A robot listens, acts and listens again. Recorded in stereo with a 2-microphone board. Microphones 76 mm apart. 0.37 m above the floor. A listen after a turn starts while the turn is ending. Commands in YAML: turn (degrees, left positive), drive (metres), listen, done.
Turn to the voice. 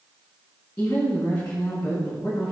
turn: 55
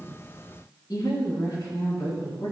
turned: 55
turn: 60
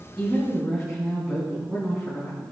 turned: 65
done: "Facing the woman speaking, over 4 m away."